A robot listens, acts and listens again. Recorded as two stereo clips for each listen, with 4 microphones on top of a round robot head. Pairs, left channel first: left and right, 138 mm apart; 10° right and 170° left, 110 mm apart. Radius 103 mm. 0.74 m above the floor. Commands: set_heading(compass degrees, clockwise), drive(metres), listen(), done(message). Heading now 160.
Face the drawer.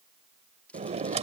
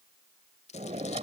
set_heading(295)
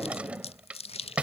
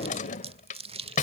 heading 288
done("Facing the drawer.")